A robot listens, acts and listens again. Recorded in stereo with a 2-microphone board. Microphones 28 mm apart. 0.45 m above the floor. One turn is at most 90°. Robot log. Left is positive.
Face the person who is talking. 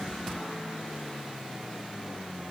cmd idle
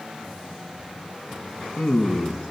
cmd yaw +90
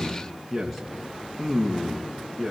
end: Found it: a man speaking, straight ahead, over 4 m away.